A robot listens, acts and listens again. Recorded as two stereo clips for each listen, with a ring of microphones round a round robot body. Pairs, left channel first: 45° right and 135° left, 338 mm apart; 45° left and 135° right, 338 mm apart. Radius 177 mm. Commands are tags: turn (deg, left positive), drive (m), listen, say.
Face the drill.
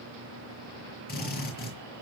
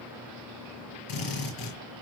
<turn deg="20"/>
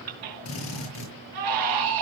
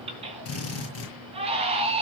<say>Facing the drill.</say>